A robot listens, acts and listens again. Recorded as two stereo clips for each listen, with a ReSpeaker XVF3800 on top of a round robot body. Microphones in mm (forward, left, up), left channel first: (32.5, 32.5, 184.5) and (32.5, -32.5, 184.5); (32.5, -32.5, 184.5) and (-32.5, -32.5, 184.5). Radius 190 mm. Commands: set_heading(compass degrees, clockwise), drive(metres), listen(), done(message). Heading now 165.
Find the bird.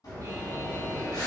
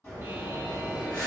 listen()
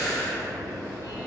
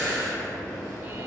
listen()
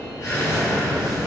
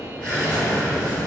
set_heading(15)
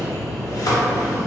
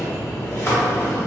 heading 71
set_heading(16)
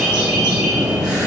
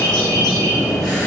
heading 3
set_heading(18)
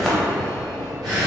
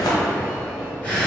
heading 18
done("Found it: a bird, straight ahead, under 1 m away.")